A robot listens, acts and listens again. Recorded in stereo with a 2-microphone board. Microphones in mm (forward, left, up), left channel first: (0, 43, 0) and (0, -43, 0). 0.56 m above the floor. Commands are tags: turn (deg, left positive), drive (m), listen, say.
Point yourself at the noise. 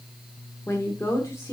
<turn deg="30"/>
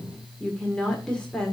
<turn deg="10"/>
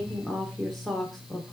<say>Facing the woman speaking.</say>